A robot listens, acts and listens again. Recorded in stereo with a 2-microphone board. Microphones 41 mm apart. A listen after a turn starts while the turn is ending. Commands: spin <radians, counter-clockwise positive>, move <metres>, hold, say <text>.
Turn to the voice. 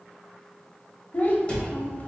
spin 0.79
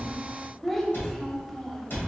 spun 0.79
say Found it: a child speaking, straight ahead.